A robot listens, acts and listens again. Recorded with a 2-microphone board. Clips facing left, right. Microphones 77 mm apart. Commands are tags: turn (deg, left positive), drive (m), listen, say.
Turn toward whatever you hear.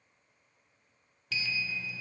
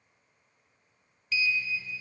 <turn deg="70"/>
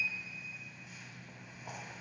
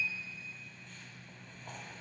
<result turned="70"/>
<turn deg="10"/>
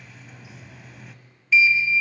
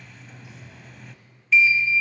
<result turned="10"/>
<say>Found it: a sliding door, straight ahead, under 1 m away.</say>